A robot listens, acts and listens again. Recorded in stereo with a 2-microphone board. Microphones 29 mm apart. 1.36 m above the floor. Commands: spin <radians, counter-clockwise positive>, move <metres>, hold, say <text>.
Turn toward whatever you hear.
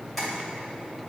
spin -0.52
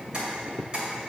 spin -2.53
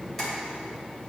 spin 0.17
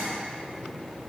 hold
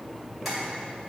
say Found it: tapping, straight ahead.